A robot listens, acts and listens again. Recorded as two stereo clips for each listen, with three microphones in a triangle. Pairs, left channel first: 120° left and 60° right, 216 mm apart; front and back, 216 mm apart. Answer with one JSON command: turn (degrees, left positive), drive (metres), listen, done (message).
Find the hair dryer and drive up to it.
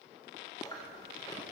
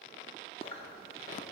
{"listen": true}
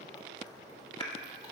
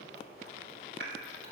{"listen": true}
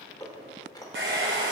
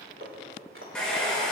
{"turn": -85}
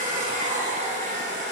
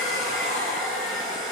{"turn": -10}
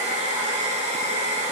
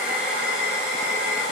{"drive": 1.0}
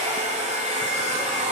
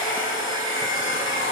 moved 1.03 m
{"drive": 1.0}
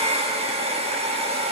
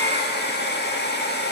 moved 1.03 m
{"drive": 1.0}
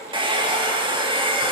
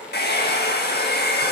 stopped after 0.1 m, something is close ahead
{"done": "I am next to the hair dryer."}